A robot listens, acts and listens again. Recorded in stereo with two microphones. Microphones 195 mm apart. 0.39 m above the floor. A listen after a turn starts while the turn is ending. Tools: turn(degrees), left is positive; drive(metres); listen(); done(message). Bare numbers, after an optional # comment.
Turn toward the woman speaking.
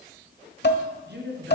# The woman speaking: about 60° right or 120° right.
turn(-60)
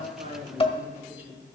# So it is at 10° right.
turn(-10)
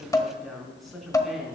done("Facing the woman speaking, 2 to 4 m away.")